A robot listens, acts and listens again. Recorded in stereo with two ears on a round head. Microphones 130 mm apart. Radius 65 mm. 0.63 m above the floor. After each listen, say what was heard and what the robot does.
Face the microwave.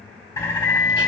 The microwave: about 60° left or 120° left. Turn 60° left.
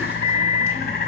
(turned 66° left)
So it is at 30° left. Turn 30° left.
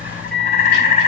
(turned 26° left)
Found it: a microwave, straight ahead, 1 to 2 m away.